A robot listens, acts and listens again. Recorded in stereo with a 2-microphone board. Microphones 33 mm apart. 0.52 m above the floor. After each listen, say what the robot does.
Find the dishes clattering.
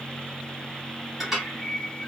Turn 30° right.
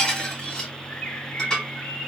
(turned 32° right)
Turn 20° left.
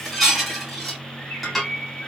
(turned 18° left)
Facing the dishes clattering, 2 to 4 m away.